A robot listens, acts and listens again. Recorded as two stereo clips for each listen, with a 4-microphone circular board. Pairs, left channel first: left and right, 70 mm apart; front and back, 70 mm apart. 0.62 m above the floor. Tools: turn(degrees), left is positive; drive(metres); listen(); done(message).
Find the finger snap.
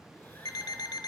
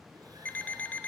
listen()
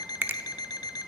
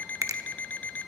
turn(degrees=-145)
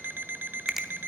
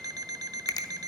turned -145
done("Facing the finger snap, under 1 m away.")